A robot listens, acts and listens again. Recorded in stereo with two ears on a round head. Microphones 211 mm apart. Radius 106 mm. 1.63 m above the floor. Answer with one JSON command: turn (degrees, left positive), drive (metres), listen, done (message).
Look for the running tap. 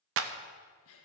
{"listen": true}
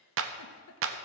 {"listen": true}
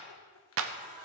{"turn": -30}
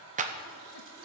{"turn": -120}
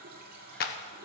{"turn": -45}
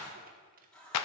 {"done": "Facing the running tap, 2 to 4 m away."}